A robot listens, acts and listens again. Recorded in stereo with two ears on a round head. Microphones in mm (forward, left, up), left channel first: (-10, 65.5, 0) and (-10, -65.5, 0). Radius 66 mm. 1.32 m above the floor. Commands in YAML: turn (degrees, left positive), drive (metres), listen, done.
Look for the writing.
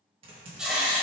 turn: -30
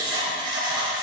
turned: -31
turn: -145
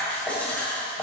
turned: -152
turn: 10
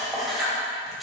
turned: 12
done: "Facing the writing."